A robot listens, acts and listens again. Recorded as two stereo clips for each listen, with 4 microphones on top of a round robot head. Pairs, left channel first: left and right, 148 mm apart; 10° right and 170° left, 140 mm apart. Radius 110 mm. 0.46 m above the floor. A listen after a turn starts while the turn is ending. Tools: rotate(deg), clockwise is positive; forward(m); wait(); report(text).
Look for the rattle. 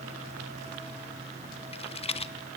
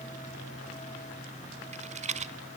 rotate(-135)
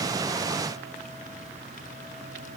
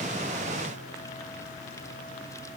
wait()
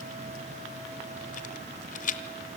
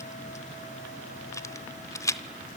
rotate(-55)
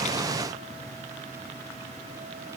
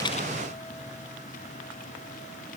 wait()
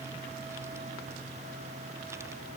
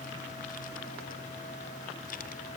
wait()
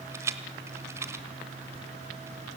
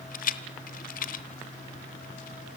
rotate(15)
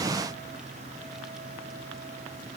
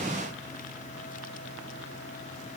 wait()
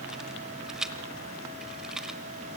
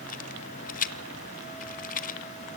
report("Found it: a rattle, straight ahead, 1 to 2 m away.")